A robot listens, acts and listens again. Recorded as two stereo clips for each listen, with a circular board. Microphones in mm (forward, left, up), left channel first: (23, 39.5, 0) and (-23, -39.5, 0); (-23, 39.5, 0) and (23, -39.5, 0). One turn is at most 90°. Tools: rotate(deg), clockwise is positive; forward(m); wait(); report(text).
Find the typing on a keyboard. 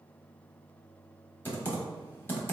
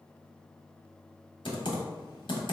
rotate(-90)
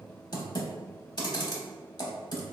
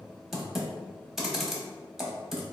rotate(-25)
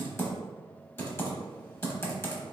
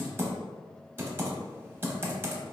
report("Found it: typing on a keyboard, straight ahead, under 1 m away.")